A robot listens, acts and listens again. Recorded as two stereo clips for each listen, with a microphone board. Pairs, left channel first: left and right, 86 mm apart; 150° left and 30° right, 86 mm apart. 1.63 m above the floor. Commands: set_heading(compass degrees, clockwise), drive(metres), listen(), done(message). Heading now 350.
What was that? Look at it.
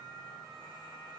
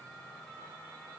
listen()
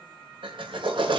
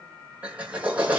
set_heading(95)
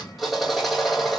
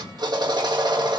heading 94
done("Facing the drill.")